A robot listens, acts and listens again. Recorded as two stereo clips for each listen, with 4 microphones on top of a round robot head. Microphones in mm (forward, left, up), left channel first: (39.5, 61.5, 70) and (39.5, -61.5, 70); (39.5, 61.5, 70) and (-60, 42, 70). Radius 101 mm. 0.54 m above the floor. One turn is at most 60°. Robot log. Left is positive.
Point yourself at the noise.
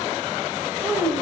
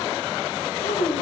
note: The child speaking: 20° right.
cmd yaw -20
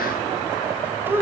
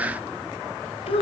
note: The child speaking is now 20° right.
cmd yaw -20
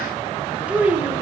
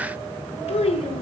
note: The child speaking is now 15° right.
cmd yaw -15
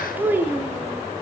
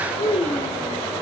note: The child speaking is now 20° right.
cmd yaw -20
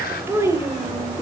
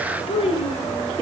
note: The child speaking is now 25° right.
cmd yaw -25
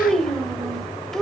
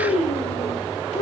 end: Found it: a child speaking, straight ahead, 2 to 4 m away.